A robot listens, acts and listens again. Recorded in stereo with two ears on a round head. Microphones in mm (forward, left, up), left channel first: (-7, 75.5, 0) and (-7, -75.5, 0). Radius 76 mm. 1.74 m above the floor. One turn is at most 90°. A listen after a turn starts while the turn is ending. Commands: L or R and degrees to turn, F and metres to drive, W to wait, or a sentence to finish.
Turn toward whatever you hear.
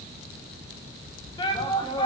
L25
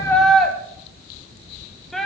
Facing the shout.